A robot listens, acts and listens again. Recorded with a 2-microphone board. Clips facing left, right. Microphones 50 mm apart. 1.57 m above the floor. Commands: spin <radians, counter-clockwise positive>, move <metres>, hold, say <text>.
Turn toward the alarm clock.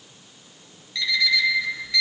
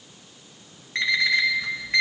spin -0.79
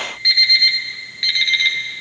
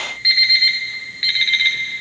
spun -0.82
say Facing the alarm clock, 1 to 2 m away.